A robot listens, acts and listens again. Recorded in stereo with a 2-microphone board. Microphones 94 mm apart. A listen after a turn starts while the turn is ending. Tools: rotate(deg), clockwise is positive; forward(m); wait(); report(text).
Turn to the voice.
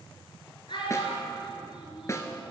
rotate(-60)
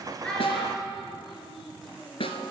report("Found it: a child speaking, straight ahead.")